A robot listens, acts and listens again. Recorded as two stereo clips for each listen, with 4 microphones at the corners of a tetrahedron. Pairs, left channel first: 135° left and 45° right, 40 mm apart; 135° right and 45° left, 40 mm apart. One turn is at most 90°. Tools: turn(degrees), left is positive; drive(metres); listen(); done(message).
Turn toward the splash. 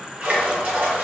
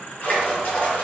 turn(degrees=-90)
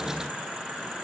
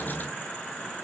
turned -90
turn(degrees=-10)
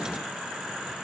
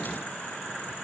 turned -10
done("I heard a splash from this way, but can't make it out now.")